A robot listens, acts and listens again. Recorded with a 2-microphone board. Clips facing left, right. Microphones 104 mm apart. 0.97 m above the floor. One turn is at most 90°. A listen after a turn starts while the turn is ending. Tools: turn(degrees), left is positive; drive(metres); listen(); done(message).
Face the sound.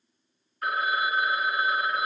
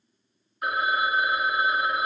turn(degrees=-20)
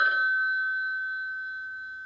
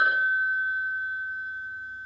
turn(degrees=-90)
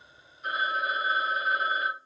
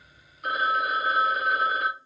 turn(degrees=-75)
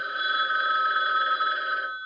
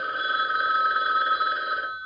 turn(degrees=-15)
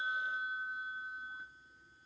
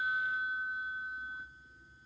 done("Found it: a phone ringing, straight ahead.")